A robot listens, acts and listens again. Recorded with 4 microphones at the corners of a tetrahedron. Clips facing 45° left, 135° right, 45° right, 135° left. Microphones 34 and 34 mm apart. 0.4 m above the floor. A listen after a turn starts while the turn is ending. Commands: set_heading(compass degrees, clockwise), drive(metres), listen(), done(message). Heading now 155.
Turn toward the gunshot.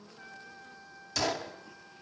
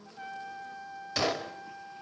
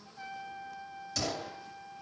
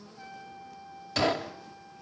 set_heading(340)
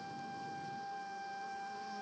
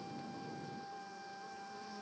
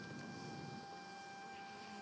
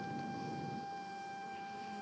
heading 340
done("Facing where the gunshot came from. I can't hear it now.")